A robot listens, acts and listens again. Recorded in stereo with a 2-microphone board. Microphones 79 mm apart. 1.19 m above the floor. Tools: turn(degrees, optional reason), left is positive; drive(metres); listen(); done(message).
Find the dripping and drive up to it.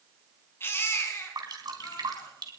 turn(degrees=-60, reason="The dripping: about 60° right or 120° right.")
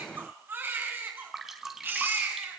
drive(metres=1.0)
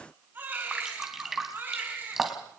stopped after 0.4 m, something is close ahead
done("Blocked. The dripping is further on, straight ahead.")